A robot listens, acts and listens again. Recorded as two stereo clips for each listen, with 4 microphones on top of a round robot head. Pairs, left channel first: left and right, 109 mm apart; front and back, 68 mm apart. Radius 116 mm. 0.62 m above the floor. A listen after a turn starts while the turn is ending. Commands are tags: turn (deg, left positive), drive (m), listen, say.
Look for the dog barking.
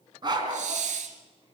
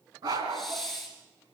<turn deg="-140"/>
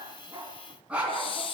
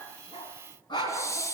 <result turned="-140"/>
<turn deg="-10"/>
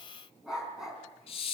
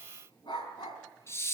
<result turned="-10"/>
<say>Facing the dog barking.</say>